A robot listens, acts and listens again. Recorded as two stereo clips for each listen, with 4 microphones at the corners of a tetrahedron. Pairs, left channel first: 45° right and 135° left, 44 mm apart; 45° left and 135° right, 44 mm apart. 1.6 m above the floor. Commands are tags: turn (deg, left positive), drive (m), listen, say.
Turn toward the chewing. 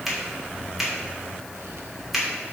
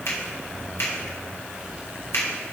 <listen/>
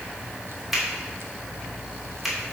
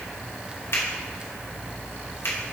<listen/>
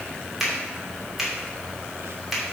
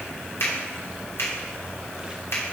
<say>I can't make out chewing, only a finger snap.</say>